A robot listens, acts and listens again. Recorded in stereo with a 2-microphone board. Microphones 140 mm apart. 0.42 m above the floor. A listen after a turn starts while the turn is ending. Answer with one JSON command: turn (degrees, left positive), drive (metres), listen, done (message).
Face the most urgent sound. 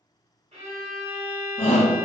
{"turn": 50}
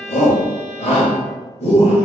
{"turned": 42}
{"turn": 75}
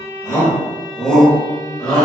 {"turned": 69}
{"done": "Found it: a shout, straight ahead, 1 to 2 m away."}